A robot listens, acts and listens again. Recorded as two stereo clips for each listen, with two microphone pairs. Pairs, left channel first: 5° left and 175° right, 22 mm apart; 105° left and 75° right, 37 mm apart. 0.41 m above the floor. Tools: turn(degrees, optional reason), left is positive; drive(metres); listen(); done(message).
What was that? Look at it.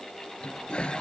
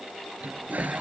turn(degrees=-30, reason="The toilet flushing: 30° right.")
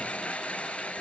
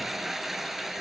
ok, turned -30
turn(degrees=10, reason="The toilet flushing is now 10° left.")
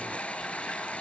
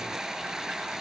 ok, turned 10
done("Found it: a toilet flushing, straight ahead.")